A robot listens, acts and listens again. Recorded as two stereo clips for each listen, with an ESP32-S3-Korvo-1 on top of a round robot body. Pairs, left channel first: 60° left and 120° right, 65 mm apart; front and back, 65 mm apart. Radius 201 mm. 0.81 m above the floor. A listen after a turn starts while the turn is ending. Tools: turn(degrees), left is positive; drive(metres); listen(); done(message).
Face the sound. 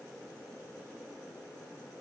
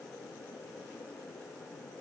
listen()
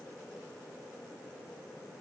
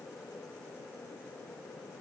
listen()
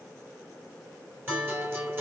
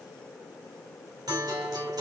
turn(degrees=-175)
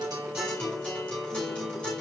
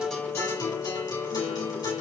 turn(degrees=-15)
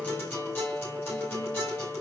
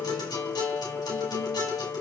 done("Found it: a guitar, straight ahead, 2 to 4 m away.")